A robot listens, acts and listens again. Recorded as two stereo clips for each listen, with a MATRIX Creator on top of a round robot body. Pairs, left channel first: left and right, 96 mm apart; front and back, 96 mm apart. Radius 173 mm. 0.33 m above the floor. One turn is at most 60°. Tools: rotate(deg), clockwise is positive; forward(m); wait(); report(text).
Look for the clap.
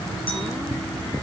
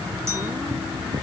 wait()
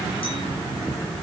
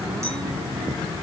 wait()
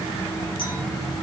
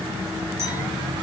report("I can't make out a clap.")